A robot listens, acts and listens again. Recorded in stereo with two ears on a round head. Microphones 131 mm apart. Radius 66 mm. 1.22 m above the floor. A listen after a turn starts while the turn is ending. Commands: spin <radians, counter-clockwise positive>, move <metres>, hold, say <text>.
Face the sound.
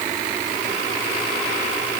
hold
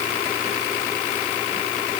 hold
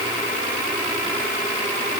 say I can't make out anything to turn to.